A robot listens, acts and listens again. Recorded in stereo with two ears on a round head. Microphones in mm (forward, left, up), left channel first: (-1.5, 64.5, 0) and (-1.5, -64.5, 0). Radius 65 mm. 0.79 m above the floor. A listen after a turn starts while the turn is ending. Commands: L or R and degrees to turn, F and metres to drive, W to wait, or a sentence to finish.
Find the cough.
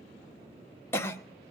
L15
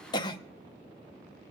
L150
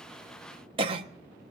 R45
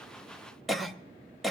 Found it: a cough, straight ahead, under 1 m away.